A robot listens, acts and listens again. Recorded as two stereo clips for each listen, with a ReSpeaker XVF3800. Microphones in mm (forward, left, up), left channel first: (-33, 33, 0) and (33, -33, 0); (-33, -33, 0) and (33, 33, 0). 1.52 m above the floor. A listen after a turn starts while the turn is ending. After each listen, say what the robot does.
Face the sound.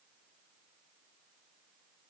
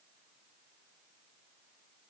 Keep listening.
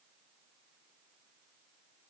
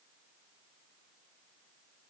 Keep listening.
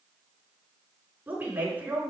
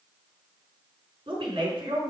Turn 20° left.
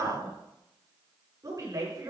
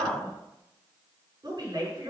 Found it: a woman speaking, straight ahead, over 4 m away.